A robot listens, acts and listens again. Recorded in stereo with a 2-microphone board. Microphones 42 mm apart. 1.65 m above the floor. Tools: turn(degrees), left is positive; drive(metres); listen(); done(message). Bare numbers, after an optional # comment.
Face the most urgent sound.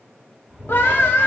# The scream: about 65° left or 115° left.
turn(65)
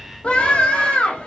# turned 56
# So it is at 35° left.
turn(35)
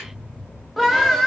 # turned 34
done("Found it: a scream, straight ahead.")